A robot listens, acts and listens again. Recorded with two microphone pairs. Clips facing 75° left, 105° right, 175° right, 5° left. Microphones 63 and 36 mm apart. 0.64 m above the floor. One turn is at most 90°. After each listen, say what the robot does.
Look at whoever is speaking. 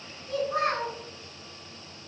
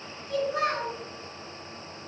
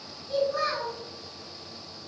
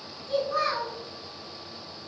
Turn 35° left.
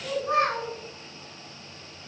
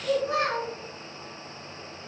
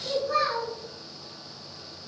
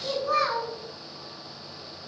Turn 15° left.
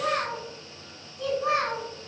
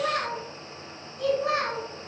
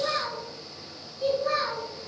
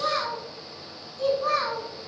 Found it: a child speaking, straight ahead.